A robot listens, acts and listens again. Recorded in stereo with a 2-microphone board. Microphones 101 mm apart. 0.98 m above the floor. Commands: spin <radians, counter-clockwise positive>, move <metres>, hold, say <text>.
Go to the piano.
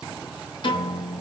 spin 0.96
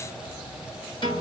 spin 1.13
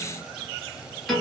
move 1.0
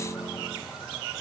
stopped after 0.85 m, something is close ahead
say Arrived at the piano, straight ahead.